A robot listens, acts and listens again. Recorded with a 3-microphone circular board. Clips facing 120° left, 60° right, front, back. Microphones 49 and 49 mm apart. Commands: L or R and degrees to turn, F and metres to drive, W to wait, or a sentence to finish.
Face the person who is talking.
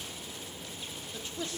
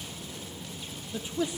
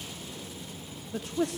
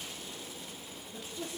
L15
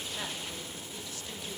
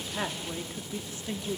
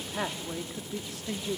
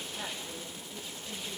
Found it: a man speaking, straight ahead, 2 to 4 m away.